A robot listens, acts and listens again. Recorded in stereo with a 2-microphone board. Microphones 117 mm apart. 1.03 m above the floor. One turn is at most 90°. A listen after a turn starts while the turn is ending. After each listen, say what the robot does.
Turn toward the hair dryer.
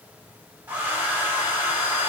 Turn 15° right.
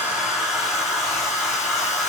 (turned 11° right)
Found it: a hair dryer, straight ahead, 2 to 4 m away.